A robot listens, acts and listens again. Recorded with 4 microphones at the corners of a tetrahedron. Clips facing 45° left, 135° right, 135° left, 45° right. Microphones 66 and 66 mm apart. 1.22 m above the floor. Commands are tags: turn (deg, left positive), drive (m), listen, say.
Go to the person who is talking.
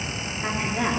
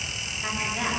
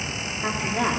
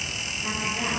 <turn deg="125"/>
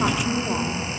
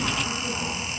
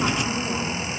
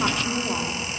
<turn deg="35"/>
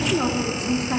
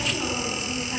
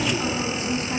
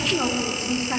<turn deg="15"/>
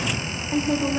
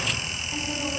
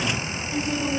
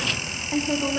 <drive m="1.0"/>
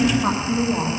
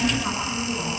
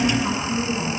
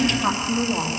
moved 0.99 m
<drive m="1.0"/>
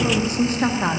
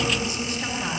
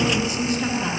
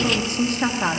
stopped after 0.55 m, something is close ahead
<say>I am next to the woman speaking.</say>